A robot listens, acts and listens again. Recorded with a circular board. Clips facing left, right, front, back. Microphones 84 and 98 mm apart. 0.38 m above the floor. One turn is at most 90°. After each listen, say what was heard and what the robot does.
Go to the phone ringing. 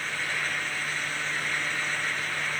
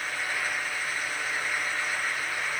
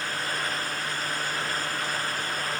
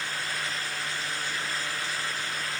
Keep listening.
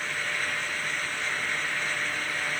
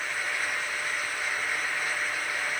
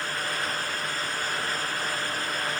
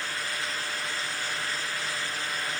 Keep listening.
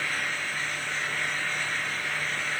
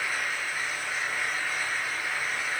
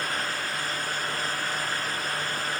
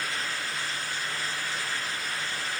I can't make out a phone ringing to turn to.